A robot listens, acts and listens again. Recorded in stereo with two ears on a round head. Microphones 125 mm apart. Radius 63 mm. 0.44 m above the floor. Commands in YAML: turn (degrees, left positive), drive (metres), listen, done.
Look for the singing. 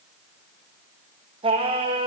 turn: -40
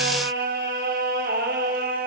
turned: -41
turn: -105
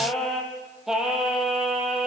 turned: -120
done: "Found it: singing, straight ahead, 2 to 4 m away."